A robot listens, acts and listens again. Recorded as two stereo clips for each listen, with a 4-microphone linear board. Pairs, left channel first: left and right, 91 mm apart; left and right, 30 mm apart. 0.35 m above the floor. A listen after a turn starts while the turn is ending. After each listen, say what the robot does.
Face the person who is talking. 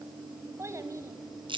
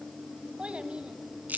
Turn 35° right.
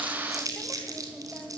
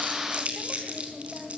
Keep listening.
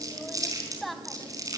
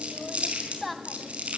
Facing the child speaking, 1 to 2 m away.